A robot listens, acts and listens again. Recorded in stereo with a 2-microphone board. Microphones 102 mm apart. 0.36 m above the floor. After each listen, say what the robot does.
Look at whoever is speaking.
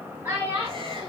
Turn 25° right.
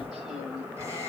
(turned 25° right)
Keep listening.
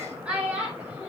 Turn 30° right.
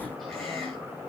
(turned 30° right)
Keep listening.
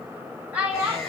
Turn 20° right.
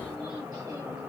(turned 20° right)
Keep listening.
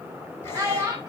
Turn 20° right.
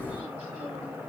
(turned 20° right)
Keep listening.
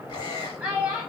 Facing the child speaking.